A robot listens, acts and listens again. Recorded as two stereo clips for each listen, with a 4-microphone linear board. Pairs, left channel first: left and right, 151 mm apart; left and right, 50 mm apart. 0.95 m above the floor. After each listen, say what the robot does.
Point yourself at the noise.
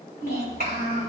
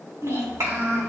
Turn 90° right.
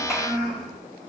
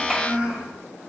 Facing the child speaking, 2 to 4 m away.